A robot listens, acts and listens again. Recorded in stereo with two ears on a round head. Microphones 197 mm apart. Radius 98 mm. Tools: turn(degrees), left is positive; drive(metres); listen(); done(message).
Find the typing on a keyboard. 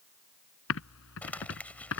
turn(degrees=70)
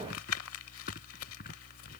turn(degrees=40)
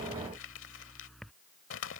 done("Facing the typing on a keyboard.")